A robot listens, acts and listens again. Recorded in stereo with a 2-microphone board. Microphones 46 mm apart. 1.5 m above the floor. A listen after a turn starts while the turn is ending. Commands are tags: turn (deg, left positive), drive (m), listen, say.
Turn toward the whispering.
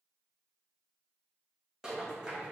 <listen/>
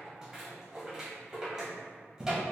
<listen/>
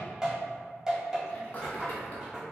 <turn deg="30"/>
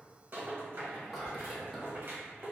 <say>Facing the whispering.</say>